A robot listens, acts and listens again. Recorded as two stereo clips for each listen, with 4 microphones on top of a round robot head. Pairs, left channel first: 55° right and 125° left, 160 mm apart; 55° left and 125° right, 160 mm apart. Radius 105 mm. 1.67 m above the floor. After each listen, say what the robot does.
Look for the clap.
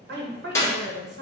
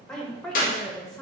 Turn 20° left.
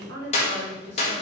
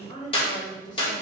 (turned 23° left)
Facing the clap, 1 to 2 m away.